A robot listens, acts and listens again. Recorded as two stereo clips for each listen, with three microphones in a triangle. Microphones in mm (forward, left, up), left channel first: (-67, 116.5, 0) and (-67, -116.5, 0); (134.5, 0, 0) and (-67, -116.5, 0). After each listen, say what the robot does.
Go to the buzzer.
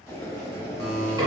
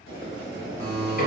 Turn 95° right.
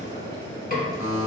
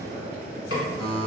Turn 35° right.
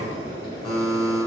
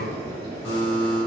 Drive 1.0 m forward.
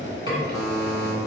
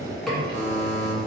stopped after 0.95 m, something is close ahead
Arrived at the buzzer, straight ahead.